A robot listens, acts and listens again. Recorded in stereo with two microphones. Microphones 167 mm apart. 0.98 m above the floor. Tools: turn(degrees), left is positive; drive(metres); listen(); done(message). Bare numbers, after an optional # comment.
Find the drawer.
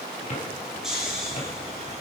# The drawer: about 45° left or 135° left.
turn(45)
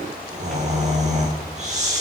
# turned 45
listen()
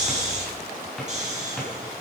done("Facing the drawer.")